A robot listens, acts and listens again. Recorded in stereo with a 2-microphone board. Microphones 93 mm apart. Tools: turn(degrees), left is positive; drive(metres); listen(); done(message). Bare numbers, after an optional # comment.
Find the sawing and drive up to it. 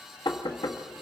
listen()
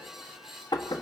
listen()
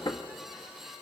done("I can't make out sawing to turn to.")